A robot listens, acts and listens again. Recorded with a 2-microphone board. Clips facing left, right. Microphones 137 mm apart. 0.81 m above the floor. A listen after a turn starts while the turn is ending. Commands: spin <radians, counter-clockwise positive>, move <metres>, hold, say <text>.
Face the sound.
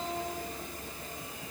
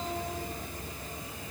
hold
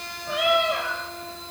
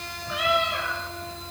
spin 0.96
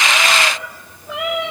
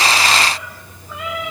spin 1.40
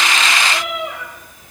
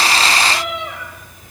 say Facing the cat meowing.